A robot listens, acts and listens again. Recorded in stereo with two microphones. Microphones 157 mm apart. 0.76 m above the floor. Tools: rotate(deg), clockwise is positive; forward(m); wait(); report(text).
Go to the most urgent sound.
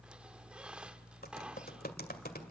wait()
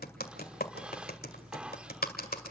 wait()
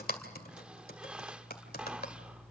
report("I can't make out anything urgent, only typing on a keyboard and a squeak.")